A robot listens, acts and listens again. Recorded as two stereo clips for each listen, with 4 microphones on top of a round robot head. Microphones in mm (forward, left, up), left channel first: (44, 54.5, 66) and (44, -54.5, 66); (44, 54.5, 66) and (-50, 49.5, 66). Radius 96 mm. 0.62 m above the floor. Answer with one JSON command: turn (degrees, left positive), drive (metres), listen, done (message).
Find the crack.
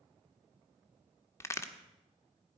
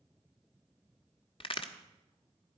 {"turn": 25}
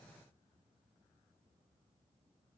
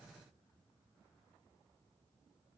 {"done": "Facing where the crack came from. I can't hear it now."}